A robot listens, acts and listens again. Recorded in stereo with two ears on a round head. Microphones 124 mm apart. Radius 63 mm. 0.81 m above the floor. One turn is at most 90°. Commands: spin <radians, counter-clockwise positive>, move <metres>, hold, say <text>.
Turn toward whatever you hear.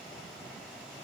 hold
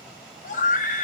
spin 1.05
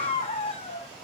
spin 0.79
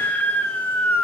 spin 0.26
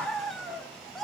say Found it: a scream, straight ahead, 1 to 2 m away.